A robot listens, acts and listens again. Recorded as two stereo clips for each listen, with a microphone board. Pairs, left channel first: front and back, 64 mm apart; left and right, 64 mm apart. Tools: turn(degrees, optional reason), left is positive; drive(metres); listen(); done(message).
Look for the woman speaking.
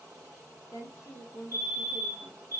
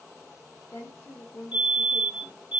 turn(degrees=45, reason="The woman speaking: 45° left.")
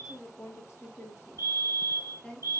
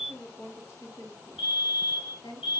turn(degrees=75, reason="The woman speaking is now 75° left.")
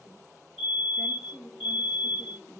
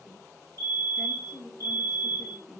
turn(degrees=15, reason="The woman speaking is now 15° left.")
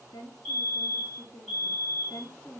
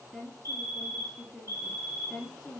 done("Facing the woman speaking.")